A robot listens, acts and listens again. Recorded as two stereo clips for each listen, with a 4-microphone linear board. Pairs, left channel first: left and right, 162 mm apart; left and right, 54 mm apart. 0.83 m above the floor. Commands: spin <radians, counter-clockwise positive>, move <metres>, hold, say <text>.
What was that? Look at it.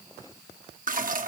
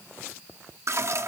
spin -0.96
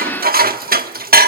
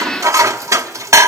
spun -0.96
spin -1.13
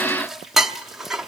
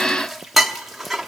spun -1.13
say Facing the dishes clattering, under 1 m away.